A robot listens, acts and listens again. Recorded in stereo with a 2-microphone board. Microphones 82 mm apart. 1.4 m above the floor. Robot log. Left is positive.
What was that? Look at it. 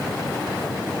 cmd idle
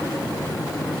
cmd idle
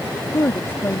note: The woman speaking: about 30° left or 150° left.
cmd yaw +30
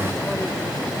cmd idle
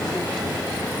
cmd idle
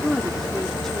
end: Found it: a woman speaking, straight ahead.